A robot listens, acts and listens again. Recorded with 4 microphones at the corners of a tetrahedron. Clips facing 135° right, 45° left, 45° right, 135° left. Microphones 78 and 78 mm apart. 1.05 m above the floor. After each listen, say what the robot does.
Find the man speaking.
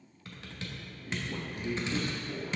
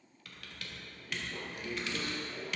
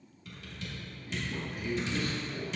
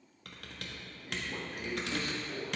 Turn 180° left.
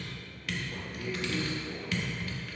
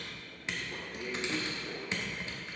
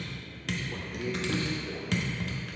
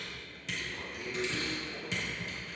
Turn 30° right.
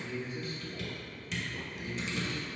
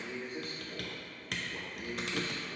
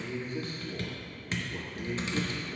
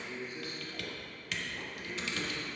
Found it: a man speaking, straight ahead, over 4 m away.